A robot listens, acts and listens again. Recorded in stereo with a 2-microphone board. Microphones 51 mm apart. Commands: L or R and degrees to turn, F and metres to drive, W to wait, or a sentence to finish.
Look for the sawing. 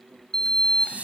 W
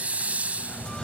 W
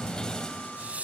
I can't make out sawing to turn to.